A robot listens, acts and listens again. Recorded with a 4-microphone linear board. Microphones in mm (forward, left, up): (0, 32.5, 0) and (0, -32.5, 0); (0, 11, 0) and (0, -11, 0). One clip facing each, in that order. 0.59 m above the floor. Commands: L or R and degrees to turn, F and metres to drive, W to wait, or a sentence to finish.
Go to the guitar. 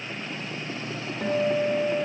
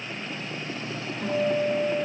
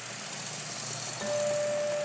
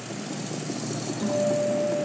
L55
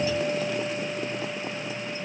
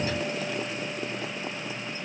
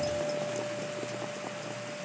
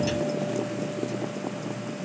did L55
W
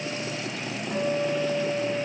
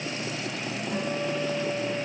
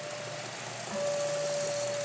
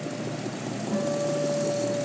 L20
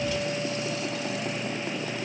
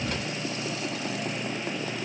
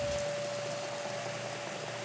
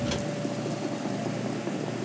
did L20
W
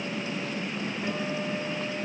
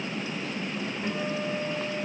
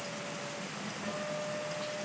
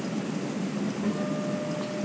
L10
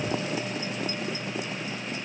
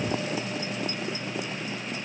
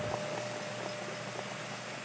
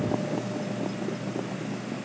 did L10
W
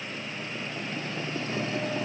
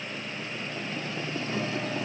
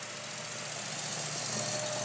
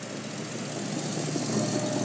W
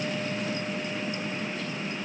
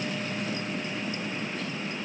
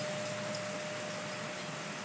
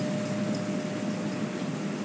I heard a guitar from this way, but can't make it out now. I did not reach it.